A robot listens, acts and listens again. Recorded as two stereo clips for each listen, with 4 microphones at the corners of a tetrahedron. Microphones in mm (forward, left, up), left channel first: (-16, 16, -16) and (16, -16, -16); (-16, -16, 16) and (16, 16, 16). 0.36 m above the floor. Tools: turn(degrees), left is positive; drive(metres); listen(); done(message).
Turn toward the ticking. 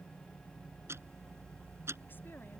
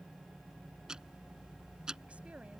turn(degrees=-30)
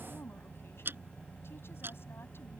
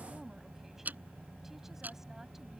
turn(degrees=-10)
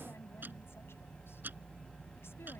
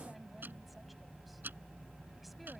listen()
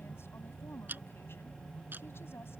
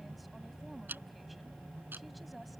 done("Found it: ticking, straight ahead.")